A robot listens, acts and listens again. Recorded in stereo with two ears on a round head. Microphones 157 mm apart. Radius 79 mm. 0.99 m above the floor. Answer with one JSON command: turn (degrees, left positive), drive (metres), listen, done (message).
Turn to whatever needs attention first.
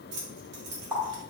{"listen": true}
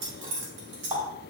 {"listen": true}
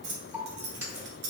{"done": "I can't make out anything urgent to turn to."}